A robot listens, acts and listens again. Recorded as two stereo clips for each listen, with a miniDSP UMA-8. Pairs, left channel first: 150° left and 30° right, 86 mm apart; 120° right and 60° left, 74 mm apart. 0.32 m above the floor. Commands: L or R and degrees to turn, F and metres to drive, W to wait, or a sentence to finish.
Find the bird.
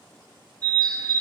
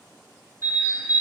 Facing the bird, 2 to 4 m away.